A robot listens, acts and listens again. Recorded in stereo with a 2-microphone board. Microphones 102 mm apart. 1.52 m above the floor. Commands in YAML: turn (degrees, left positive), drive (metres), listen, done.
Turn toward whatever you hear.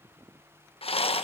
turn: 70
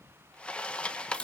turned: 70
turn: 10
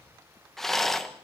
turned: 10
done: "Facing the rattle."